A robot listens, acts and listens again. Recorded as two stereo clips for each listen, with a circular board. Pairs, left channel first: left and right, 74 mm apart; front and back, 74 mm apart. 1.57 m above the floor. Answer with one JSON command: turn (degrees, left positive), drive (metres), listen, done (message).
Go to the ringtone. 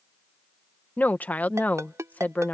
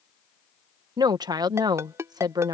{"turn": -135}
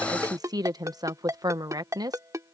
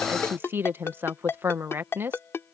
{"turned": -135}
{"turn": -50}
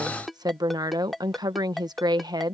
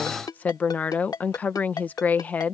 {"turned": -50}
{"drive": 1.0}
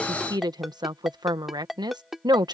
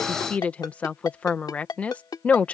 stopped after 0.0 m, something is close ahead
{"done": "Blocked. The ringtone is further on, straight ahead."}